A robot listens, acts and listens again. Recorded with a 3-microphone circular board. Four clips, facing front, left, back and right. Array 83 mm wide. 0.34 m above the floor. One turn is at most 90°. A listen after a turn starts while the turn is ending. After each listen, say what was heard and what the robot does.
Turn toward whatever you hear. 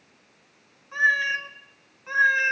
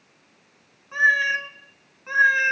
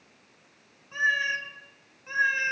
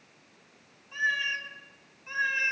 The cat meowing: 65° left. Turn 65° left.
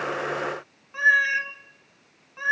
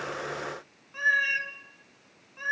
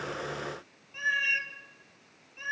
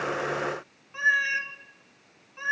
Found it: a cat meowing, straight ahead, 1 to 2 m away.